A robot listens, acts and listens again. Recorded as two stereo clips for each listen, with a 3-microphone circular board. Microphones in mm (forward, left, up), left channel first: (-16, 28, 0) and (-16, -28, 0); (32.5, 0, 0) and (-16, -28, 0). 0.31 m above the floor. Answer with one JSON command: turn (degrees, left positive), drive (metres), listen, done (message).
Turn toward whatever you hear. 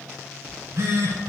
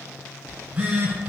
{"turn": -95}
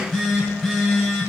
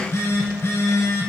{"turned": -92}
{"done": "Facing the phone buzzing."}